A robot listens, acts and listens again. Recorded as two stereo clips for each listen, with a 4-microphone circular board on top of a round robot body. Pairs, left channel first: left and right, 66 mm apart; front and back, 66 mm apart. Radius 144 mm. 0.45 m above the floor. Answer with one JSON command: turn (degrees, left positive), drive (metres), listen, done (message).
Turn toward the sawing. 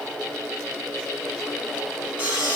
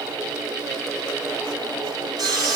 {"turn": -155}
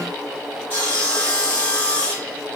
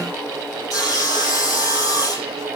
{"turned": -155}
{"turn": 25}
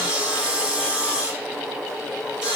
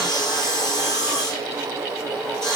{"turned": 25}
{"turn": -15}
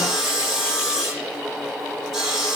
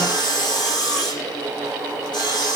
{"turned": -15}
{"done": "Facing the sawing."}